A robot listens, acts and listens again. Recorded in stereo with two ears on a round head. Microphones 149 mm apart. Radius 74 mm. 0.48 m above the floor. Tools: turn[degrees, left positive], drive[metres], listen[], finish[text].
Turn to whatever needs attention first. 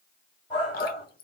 Thought: The shout: about 35° left or 145° left.
Action: turn[35]
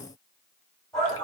Action: finish[Facing the shout, 2 to 4 m away.]